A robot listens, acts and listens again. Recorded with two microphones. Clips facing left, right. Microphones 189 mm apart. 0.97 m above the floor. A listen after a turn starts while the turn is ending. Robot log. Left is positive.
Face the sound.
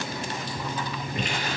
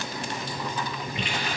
cmd idle
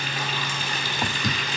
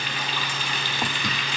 note: The running tap: about 45° left or 135° left.
cmd yaw +45
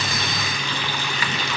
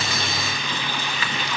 note: So it is at 95° left.
cmd yaw +95
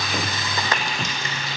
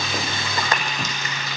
note: The running tap is now 30° left.
cmd yaw +30
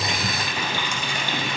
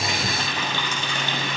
note: The running tap is now 15° left.
cmd yaw +15
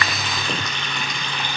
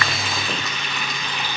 end: Found it: a running tap, straight ahead.